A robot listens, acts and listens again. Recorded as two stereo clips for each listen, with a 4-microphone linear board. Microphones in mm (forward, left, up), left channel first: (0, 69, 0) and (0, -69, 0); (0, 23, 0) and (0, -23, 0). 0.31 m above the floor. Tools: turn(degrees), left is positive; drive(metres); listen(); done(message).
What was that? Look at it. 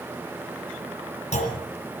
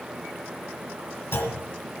turn(degrees=55)
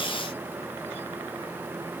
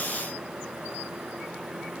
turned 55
listen()
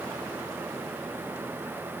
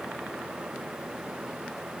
done("I heard a clunk, but can't make it out now. It was about straight ahead or 70° left.")